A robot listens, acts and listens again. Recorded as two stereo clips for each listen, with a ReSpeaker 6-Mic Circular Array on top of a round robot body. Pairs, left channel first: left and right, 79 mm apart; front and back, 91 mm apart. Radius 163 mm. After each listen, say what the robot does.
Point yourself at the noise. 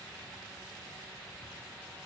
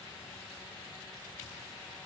Keep listening.
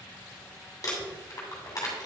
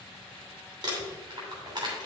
Turn 140° left.
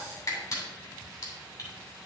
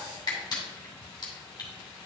Turn 45° left.
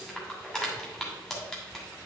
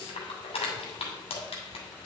Turn 10° left.
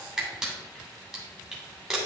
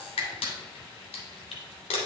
Found it: crumpling, straight ahead, 2 to 4 m away.